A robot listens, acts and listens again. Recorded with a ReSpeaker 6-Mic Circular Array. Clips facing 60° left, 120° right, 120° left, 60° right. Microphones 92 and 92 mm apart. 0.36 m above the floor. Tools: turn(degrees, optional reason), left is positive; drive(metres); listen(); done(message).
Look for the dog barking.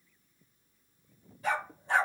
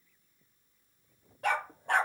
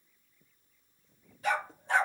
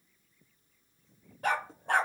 turn(degrees=-90, reason="The dog barking: 90° right.")
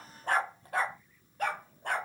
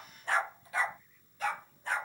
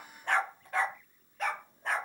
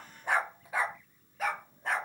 turn(degrees=30, reason="The dog barking is now 30° left.")
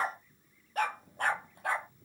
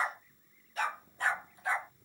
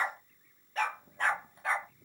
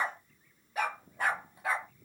turn(degrees=25, reason="The dog barking is now 25° left.")
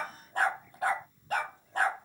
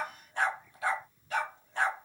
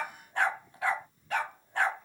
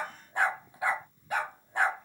turn(degrees=15, reason="The dog barking is now 15° left.")
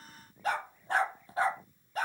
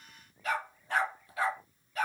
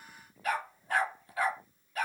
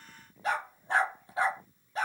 done("Facing the dog barking.")